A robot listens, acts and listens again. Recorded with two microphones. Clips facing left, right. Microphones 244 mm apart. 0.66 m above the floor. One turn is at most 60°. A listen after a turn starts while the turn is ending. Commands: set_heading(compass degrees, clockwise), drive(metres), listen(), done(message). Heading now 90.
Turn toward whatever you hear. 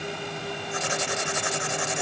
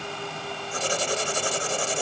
set_heading(125)
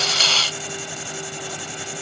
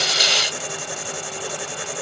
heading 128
set_heading(188)
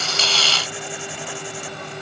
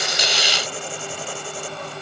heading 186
set_heading(231)
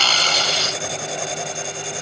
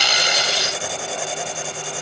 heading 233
done("Facing the writing.")